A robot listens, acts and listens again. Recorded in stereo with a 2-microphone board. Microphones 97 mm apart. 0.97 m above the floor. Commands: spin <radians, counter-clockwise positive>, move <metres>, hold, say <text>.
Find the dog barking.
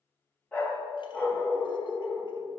spin 0.61
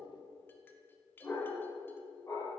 spin 0.61
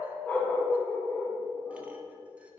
spin 0.52
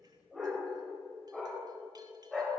say Facing the dog barking.